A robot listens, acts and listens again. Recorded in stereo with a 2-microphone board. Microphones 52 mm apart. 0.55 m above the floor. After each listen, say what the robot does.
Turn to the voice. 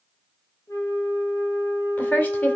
Turn 35° left.
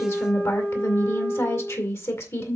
Turn 105° left.
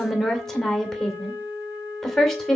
Facing the woman speaking.